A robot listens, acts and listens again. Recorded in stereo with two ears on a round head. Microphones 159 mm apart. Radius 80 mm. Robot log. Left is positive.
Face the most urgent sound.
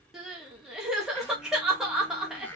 cmd yaw -30
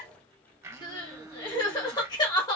note: So it is at 25° left.
cmd yaw +25
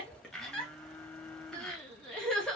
end: Facing the crying.